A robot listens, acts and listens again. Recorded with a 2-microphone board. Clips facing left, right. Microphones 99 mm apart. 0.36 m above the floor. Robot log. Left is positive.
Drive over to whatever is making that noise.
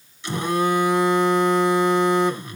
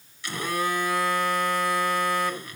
note: The phone buzzing: about 25° left or 155° left.
cmd yaw +25
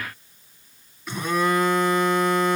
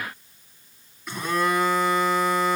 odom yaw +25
cmd fwd 1.0
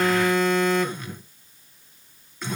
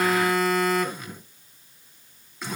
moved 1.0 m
cmd fwd 1.0
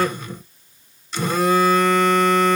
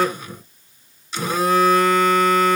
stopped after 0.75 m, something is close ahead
end: Arrived at the phone buzzing, straight ahead.